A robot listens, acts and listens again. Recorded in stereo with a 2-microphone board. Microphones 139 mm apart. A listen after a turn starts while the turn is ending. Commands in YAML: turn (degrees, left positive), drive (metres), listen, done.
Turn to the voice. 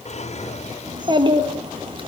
turn: -40
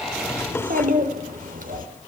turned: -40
turn: -100
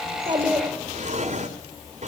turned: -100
turn: -15
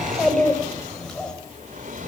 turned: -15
done: "Facing the child speaking, over 4 m away."